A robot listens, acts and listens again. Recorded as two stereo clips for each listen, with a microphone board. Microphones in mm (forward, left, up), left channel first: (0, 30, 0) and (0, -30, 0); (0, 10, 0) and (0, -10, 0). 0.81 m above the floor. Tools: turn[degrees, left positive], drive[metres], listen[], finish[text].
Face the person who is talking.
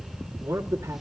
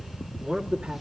Thought: The man speaking: about 60° right or 120° right.
Action: turn[-60]
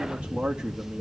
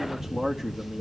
Thought: So it is at 10° right.
Action: turn[-10]
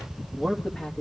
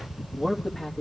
Thought: The man speaking is now 20° left.
Action: turn[20]
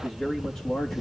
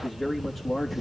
Thought: The man speaking is now 25° left.
Action: turn[25]
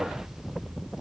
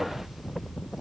Action: listen[]
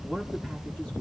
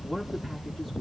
Thought: The man speaking is now 20° left.
Action: turn[20]
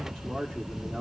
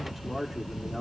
Thought: The man speaking is now 10° left.
Action: turn[10]
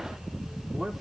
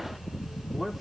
Action: finish[Facing the man speaking.]